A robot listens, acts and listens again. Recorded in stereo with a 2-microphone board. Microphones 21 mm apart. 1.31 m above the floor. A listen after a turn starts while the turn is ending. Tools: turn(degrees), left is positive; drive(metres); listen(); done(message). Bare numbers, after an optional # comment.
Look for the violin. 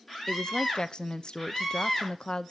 listen()
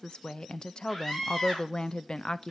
listen()
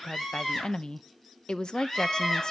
turn(30)
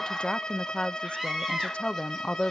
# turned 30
# So it is at 140° left.
turn(140)
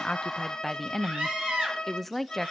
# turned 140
# The violin is now 45° left.
turn(45)
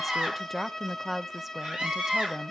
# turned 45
# The violin is now 25° left.
turn(25)
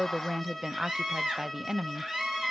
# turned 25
# The violin is now 10° left.
turn(10)
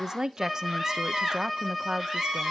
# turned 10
done("Found it: a violin, straight ahead, 2 to 4 m away.")